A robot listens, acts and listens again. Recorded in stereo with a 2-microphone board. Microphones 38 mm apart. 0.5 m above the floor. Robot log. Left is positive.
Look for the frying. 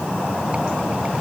cmd idle
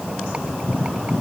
cmd idle
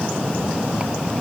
end: I can't make out frying.